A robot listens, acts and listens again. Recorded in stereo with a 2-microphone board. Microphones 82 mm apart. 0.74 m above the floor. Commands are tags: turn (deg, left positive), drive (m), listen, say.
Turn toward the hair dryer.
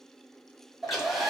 <turn deg="30"/>
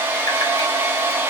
<turn deg="-30"/>
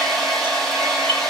<say>Found it: a hair dryer, straight ahead, under 1 m away.</say>